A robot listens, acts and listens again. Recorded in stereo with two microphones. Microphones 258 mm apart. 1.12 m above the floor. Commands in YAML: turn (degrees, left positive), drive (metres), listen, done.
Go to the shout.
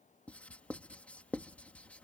listen: true
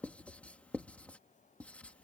listen: true
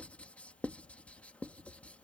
done: "I can't make out a shout to turn to."